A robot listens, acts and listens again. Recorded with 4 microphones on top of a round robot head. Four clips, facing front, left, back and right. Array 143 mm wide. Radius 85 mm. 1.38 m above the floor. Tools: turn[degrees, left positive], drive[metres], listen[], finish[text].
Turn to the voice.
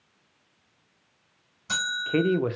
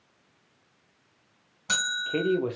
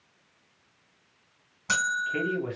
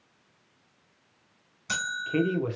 Thought: The man speaking: 20° left.
Action: turn[20]
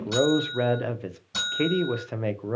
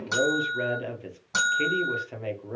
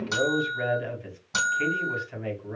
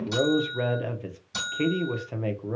Action: finish[Found it: a man speaking, straight ahead, under 1 m away.]